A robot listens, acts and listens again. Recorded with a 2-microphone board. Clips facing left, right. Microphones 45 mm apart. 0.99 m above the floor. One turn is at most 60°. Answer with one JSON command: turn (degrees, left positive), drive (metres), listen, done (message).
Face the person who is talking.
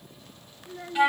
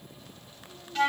{"turn": 60}
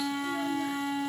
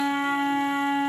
{"turn": 30}
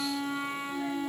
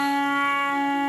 {"listen": true}
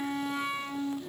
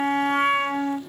{"done": "Facing where the child speaking came from. I can't hear it now."}